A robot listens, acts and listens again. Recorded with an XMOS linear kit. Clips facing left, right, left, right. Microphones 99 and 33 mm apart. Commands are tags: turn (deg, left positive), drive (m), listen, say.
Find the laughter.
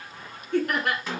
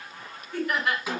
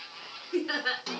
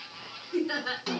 <turn deg="60"/>
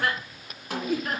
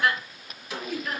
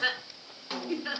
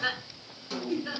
<turn deg="50"/>
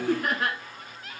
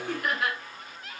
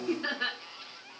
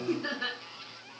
<turn deg="40"/>
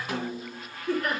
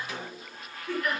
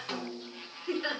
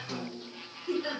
<turn deg="40"/>
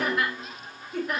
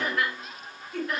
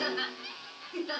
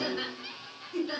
<turn deg="10"/>
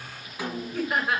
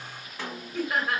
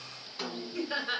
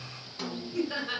<say>Facing the laughter.</say>